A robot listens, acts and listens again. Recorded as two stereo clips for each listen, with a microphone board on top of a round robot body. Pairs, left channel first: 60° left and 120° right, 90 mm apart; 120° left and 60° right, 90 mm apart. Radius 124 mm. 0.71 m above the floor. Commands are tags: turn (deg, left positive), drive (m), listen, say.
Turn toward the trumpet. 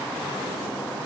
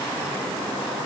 <listen/>
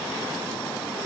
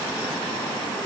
<listen/>
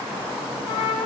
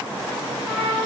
<turn deg="15"/>
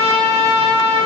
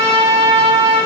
<say>Found it: a trumpet, straight ahead, over 4 m away.</say>